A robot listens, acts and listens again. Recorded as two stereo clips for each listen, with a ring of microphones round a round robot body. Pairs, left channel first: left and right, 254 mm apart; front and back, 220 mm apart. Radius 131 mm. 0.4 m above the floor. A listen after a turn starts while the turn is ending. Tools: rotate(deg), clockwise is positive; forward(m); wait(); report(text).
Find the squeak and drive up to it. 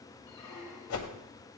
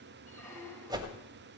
rotate(-80)
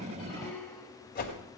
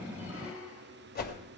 forward(1.0)
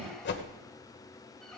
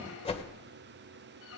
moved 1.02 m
forward(1.0)
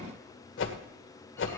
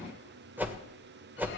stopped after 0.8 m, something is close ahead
wait()
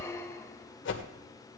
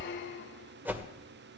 rotate(-10)
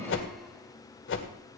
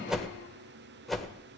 wait()
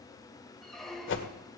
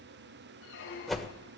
report("I am next to the squeak.")